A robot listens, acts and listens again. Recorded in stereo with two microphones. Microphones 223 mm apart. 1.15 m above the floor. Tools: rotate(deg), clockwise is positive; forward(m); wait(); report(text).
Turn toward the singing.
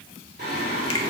rotate(40)
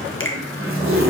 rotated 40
report("Facing the singing.")